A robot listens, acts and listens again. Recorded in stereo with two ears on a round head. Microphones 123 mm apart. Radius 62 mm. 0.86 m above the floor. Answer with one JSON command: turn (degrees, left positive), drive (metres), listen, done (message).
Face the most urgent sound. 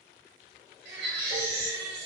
{"turn": -90}
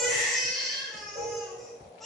{"done": "Facing the baby crying."}